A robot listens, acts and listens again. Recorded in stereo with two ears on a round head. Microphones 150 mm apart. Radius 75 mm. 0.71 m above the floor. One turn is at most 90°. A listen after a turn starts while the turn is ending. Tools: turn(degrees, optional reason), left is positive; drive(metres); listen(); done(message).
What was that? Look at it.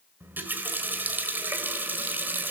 turn(degrees=-30)
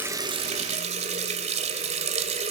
turn(degrees=-90, reason="So it is at 140° right.")
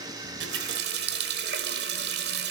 turn(degrees=-70, reason="The running tap is now 70° right.")
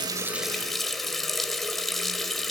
done("Found it: a running tap, straight ahead.")